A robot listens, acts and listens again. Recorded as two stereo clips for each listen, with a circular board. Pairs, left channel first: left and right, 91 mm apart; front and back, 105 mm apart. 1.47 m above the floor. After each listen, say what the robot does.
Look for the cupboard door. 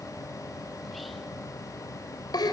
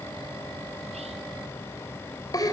Keep listening.
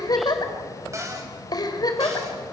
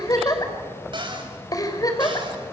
Turn 145° right.
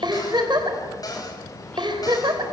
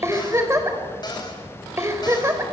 Turn 45° left.
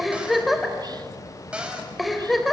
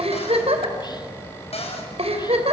Turn 10° right.
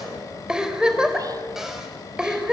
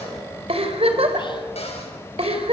Keep listening.
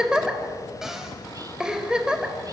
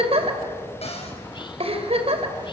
Facing the cupboard door.